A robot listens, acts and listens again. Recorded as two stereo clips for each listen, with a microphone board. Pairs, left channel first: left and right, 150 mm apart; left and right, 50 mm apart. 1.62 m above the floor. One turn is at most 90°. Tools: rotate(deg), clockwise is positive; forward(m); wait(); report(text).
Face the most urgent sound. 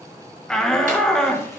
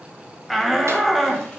rotate(-30)
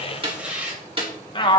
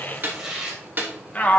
rotate(-90)
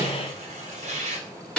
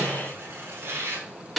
rotate(-55)
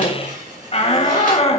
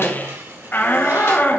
rotate(-45)
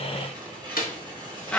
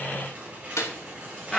rotate(-10)
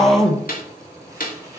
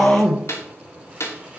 report("Facing the shout, 1 to 2 m away.")